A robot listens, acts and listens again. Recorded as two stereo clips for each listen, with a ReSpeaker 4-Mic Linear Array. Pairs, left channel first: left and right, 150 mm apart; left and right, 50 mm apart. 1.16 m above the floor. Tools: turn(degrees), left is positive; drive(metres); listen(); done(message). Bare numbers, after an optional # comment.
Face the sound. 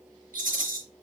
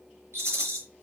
turn(-90)
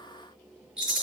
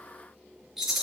done("Found it: a rattle, straight ahead.")